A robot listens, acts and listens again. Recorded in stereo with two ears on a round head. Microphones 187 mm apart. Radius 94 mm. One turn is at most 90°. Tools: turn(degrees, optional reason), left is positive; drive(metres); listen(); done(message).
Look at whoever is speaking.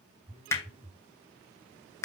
listen()
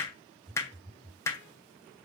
listen()
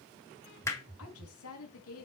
turn(degrees=90)
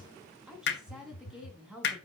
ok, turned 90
done("Facing the woman speaking.")